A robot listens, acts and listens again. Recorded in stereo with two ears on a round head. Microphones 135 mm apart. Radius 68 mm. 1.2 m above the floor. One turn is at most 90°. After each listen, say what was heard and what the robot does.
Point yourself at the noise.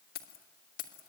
The keys jangling: about 55° left or 125° left. Turn 55° left.
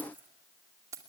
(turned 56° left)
So it is at 20° right. Turn 20° right.
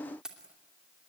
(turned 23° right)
Found it: keys jangling, straight ahead.